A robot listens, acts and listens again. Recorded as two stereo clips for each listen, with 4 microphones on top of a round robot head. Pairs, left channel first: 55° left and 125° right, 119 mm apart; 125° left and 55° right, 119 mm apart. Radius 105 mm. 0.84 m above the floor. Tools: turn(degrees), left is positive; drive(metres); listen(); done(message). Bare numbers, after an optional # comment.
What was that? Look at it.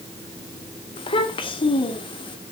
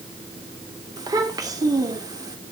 done("Facing the child speaking.")